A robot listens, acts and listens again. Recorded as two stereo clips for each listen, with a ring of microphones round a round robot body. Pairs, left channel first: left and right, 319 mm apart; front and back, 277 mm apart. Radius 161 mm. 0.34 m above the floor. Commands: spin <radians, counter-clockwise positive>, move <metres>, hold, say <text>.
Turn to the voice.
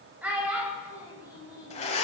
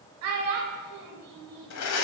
spin -3.05
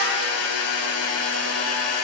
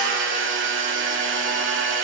hold
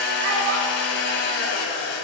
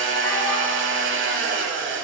hold
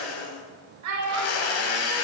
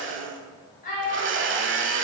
spin -1.05
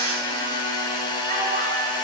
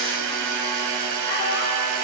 hold
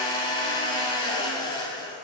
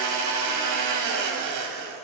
hold
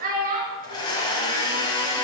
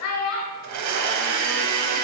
spin -0.52
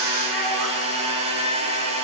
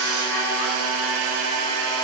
hold
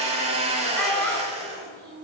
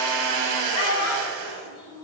say Found it: a child speaking, straight ahead.